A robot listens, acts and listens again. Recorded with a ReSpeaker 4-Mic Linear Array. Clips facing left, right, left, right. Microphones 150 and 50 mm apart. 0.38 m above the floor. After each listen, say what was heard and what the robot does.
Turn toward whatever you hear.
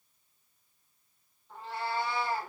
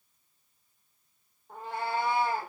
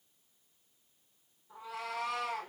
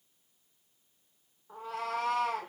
The cat meowing: about 50° right or 130° right. Turn 50° right.
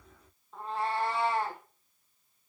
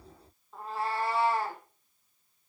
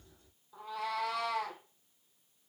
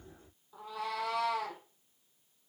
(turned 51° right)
Facing the cat meowing.